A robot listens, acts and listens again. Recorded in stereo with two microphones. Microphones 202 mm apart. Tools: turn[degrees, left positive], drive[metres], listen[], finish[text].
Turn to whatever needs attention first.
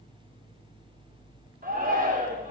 Thought: The shout: about 45° right or 135° right.
Action: turn[-45]
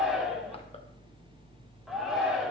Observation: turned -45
Action: finish[Found it: a shout, straight ahead.]